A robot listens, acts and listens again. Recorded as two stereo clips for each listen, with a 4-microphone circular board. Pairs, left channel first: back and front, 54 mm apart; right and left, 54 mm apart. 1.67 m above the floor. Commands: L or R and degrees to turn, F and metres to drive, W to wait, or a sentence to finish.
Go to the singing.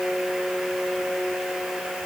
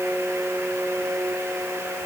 W
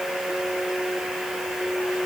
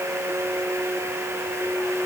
W
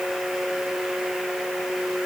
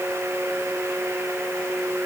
I can't make out singing.